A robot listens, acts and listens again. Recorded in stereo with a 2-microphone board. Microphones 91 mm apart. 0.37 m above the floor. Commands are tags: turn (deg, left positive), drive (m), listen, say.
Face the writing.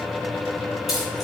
<listen/>
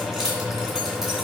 <listen/>
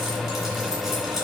<say>I can't make out writing, only keys jangling.</say>